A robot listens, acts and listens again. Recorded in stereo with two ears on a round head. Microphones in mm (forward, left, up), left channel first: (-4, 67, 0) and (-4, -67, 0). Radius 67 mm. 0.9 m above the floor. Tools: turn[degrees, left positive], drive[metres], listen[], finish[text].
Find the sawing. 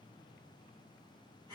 Action: listen[]
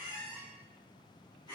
Action: listen[]
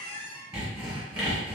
Action: turn[-30]
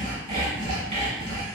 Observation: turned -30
Thought: So it is at 140° right.
Action: turn[-140]
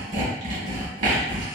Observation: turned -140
Thought: The sawing is now 50° right.
Action: turn[-50]
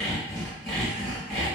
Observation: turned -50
Action: finish[Found it: sawing, straight ahead, 1 to 2 m away.]